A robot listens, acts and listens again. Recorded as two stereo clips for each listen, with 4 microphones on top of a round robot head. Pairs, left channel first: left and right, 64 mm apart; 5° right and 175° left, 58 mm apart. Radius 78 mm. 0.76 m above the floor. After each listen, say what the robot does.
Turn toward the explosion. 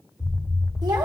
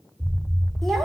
Turn 90° left.
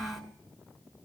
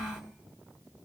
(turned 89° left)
I heard an explosion from this way, but can't make it out now.